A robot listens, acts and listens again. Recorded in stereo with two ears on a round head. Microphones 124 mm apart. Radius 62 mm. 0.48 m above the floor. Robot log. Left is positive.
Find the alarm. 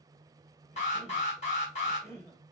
note: The alarm: about 50° left or 130° left.
cmd yaw +50
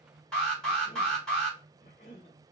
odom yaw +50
end: Found it: an alarm, straight ahead, 2 to 4 m away.